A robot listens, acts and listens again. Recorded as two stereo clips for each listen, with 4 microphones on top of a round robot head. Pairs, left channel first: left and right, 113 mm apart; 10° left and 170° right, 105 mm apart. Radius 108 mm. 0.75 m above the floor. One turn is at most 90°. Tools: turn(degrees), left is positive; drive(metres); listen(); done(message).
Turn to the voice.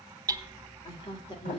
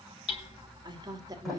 turn(degrees=90)
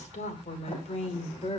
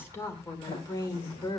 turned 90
turn(degrees=60)
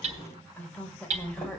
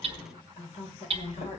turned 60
turn(degrees=10)
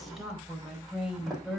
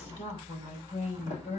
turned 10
done("Facing the woman speaking.")